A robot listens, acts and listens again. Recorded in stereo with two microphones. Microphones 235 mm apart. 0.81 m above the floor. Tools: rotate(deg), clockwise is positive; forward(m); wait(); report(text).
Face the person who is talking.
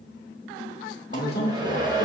rotate(-45)
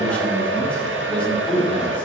report("Facing the man speaking.")